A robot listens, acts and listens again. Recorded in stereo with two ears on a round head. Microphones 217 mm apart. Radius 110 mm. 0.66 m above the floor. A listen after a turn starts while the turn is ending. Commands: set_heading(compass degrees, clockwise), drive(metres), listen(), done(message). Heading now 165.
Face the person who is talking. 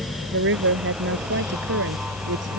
set_heading(220)
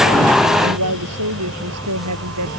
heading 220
set_heading(290)
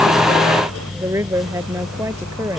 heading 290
set_heading(300)
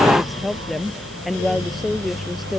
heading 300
done("Facing the woman speaking.")